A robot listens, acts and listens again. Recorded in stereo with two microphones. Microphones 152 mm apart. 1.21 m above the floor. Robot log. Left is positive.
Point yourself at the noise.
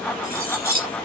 cmd yaw -90
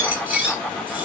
note: So it is at 10° right.
cmd yaw -10
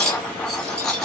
end: Facing the cutlery clinking.